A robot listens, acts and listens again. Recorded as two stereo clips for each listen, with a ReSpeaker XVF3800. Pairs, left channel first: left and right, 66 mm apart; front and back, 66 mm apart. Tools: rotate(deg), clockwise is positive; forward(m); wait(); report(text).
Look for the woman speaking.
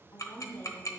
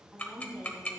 rotate(-105)
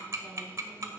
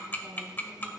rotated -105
wait()
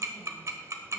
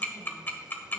wait()
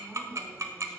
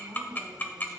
report("Found it: a woman speaking, straight ahead.")